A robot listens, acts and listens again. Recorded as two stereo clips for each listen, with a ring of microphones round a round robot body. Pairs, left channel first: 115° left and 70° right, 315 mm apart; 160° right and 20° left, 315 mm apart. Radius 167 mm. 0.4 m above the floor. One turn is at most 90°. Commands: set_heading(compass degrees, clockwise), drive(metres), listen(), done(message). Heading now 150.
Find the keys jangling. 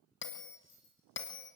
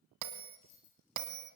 set_heading(60)
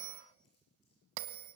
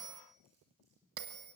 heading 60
set_heading(345)
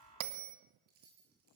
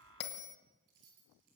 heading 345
done("Found it: keys jangling, straight ahead, over 4 m away.")